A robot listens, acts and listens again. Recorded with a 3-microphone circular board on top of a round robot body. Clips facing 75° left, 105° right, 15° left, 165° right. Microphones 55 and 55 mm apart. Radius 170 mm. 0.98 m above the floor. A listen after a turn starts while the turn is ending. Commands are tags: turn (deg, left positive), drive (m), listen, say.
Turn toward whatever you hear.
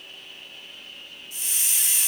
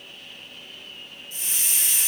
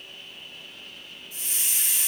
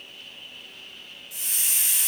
<turn deg="-160"/>
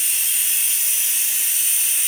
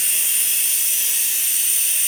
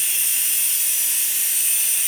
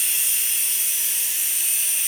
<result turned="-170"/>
<turn deg="10"/>
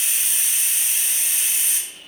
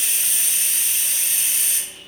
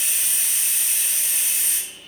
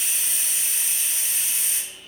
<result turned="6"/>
<say>Found it: a hiss, straight ahead, under 1 m away.</say>